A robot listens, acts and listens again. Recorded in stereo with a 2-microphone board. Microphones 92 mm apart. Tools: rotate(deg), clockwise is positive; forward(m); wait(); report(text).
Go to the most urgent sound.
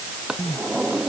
rotate(-45)
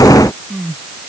forward(1.0)
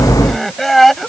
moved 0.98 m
forward(1.0)
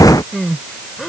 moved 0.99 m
forward(1.0)
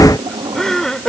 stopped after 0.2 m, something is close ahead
report("I am next to the crying.")